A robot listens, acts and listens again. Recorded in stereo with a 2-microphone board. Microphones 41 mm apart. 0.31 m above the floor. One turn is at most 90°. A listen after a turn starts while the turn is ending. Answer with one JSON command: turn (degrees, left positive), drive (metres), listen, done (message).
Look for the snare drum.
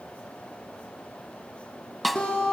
{"turn": 30}
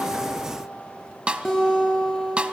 {"turn": -30}
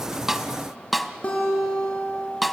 {"done": "Facing the snare drum."}